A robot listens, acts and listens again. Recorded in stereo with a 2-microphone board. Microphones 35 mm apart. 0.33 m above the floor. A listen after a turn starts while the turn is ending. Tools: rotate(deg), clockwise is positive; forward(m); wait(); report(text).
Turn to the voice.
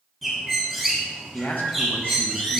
rotate(-60)
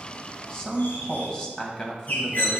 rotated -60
rotate(-25)
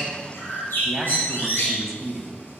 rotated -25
rotate(10)
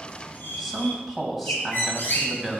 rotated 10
report("Facing the man speaking.")